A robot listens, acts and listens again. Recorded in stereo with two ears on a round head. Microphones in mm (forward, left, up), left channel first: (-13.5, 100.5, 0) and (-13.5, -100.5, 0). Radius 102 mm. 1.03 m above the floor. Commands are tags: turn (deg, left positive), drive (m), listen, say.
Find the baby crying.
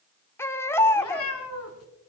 <turn deg="30"/>
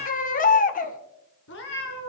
<turn deg="135"/>
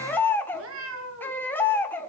<turn deg="10"/>
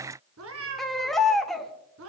<say>Facing the baby crying, 1 to 2 m away.</say>